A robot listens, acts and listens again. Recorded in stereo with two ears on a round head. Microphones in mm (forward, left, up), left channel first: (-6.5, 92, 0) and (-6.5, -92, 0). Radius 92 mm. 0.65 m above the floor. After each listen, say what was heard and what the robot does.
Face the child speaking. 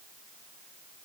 Keep listening.
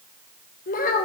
The child speaking: about 40° left or 140° left. Turn 40° left.
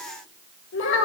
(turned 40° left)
So it is at 115° left. Turn 115° left.
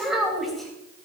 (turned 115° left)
Facing the child speaking, 2 to 4 m away.